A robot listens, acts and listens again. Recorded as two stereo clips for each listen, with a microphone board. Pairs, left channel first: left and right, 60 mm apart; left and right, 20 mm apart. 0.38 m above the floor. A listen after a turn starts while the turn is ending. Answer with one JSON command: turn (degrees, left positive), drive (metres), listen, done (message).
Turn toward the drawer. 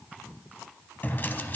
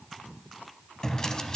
{"turn": 30}
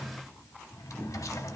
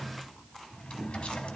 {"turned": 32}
{"turn": 115}
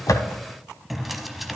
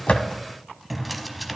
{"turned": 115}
{"done": "Facing the drawer."}